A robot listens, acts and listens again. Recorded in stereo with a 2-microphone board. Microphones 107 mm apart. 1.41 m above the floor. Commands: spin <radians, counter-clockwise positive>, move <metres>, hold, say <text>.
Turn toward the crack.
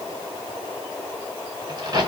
spin -0.70
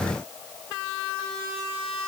hold
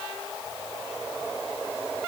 say I heard a crack, but can't make it out now. It was about straight ahead or 100° right.